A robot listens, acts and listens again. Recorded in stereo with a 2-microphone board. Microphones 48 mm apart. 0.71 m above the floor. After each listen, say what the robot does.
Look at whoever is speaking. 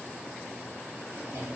Keep listening.
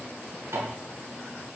Keep listening.
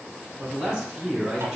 Turn 30° right.
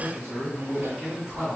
Turn 15° left.
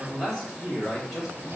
Found it: a man speaking, straight ahead, 2 to 4 m away.